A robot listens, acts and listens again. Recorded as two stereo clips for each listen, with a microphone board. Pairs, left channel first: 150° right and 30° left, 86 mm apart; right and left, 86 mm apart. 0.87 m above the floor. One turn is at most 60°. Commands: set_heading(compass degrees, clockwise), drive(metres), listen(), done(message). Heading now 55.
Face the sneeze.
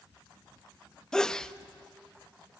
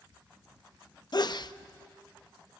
set_heading(115)
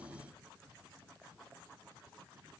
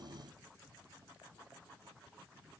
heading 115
set_heading(125)
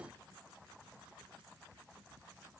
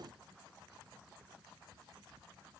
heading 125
done("I heard a sneeze from this way, but can't make it out now.")